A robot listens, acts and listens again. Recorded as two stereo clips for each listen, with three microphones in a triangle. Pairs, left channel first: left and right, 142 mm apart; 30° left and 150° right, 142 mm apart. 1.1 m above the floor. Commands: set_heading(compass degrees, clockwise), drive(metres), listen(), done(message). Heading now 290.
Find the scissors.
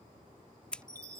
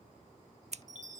set_heading(115)
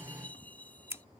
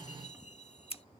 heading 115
set_heading(135)
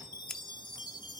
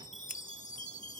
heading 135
listen()
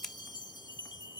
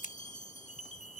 done("Facing the scissors.")